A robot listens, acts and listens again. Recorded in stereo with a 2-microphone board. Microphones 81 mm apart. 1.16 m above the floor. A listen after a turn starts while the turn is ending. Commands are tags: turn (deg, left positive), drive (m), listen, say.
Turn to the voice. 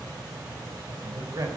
<turn deg="-45"/>
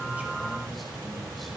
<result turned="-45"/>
<listen/>
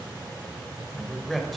<say>Facing the man speaking.</say>